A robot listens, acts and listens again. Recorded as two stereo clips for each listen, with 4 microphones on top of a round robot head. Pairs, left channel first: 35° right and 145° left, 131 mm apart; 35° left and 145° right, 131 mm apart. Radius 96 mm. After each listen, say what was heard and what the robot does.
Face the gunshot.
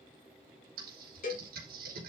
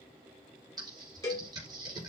Keep listening.
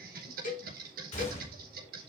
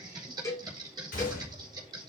Found it: a gunshot, straight ahead.